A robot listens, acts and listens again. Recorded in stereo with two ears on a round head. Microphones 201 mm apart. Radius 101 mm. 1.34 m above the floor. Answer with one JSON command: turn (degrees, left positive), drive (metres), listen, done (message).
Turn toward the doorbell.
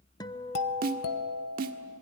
{"turn": 90}
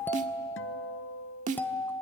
{"turn": 10}
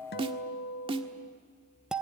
{"done": "Found it: a doorbell, straight ahead, 1 to 2 m away."}